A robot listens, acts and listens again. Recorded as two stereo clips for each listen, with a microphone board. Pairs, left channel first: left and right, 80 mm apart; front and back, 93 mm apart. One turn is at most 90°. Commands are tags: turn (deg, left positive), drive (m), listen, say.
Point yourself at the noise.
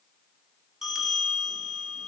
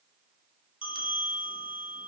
<say>Found it: a bell, straight ahead, 1 to 2 m away.</say>